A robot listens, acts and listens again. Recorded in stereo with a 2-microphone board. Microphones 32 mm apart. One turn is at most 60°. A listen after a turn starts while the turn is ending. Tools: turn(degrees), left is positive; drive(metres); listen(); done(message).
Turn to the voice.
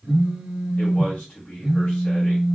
turn(degrees=60)
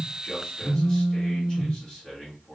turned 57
turn(degrees=25)
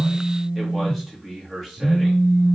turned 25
done("Found it: a man speaking, straight ahead.")